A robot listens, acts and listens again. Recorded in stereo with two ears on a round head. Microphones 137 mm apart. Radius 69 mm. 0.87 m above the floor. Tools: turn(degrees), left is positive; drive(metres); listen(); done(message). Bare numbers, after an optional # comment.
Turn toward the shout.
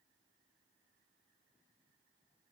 listen()
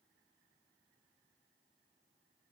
listen()
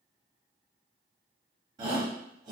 # The shout: about 30° right or 150° right.
turn(-30)
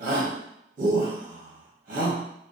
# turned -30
# So it is at 120° right.
turn(-120)
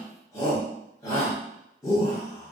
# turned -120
# The shout is now 20° left.
turn(20)
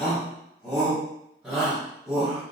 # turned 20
done("Facing the shout.")